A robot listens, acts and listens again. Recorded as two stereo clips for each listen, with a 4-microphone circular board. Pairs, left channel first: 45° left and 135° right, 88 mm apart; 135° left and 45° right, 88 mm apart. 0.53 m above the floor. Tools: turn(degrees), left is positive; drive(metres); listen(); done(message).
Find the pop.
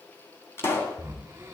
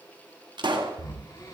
turn(degrees=-15)
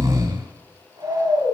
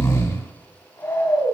done("I heard a pop from this way, but can't make it out now.")